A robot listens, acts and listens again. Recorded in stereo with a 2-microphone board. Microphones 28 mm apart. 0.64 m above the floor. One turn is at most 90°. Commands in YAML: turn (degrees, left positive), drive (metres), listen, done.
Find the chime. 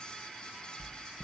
listen: true
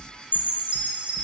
turn: -45
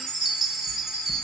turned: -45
done: "Found it: a chime, straight ahead."